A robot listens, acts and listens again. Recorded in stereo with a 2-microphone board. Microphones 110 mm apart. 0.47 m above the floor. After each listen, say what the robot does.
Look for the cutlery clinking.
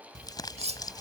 Turn 65° right.
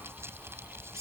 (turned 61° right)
Turn 30° right.
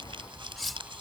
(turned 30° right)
Found it: cutlery clinking, straight ahead.